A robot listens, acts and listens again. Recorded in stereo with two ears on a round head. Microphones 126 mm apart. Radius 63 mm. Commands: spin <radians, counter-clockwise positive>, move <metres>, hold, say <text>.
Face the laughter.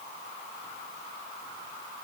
hold
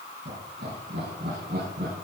spin -1.57
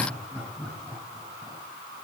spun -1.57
say Facing the laughter, over 4 m away.